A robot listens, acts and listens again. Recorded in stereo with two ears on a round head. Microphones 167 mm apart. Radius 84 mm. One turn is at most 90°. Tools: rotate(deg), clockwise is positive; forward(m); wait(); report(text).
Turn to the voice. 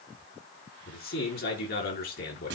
rotate(-55)
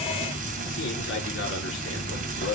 rotate(-65)
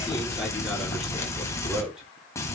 report("Facing the man speaking.")